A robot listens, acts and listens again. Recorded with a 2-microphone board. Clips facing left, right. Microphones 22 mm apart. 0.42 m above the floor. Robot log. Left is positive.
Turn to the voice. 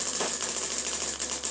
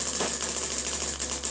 cmd idle
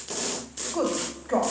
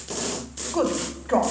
note: The woman speaking: about 30° right or 150° right.
cmd yaw -30
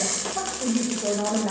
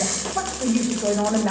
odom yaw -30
note: So it is at 110° right.
cmd yaw -110
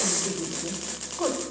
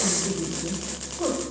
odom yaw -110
note: The woman speaking is now 45° left.
cmd yaw +45
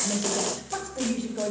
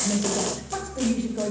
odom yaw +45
end: Found it: a woman speaking, straight ahead.